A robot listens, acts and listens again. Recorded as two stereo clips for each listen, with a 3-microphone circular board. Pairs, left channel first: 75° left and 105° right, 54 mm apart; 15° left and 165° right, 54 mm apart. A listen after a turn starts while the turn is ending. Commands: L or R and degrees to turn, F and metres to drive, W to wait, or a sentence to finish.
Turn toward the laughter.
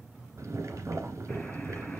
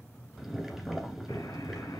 W
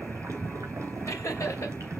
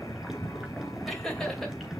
L100
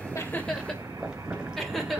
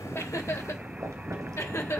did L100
R10
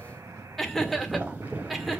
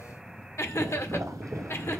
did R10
R15
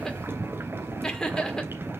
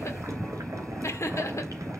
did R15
Facing the laughter, 1 to 2 m away.